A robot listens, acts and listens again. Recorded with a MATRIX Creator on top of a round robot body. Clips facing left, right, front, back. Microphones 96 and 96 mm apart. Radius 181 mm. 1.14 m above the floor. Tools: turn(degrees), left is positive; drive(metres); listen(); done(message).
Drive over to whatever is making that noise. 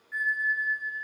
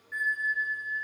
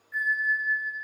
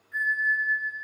turn(degrees=-170)
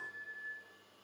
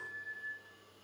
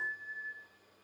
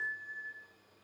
turn(degrees=25)
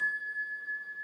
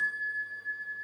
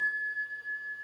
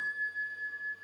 turn(degrees=-20)
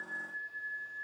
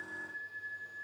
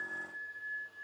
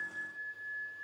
drive(metres=1.0)
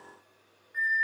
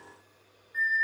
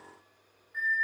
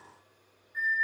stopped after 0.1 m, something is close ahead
done("Blocked. The bell is further on, straight ahead.")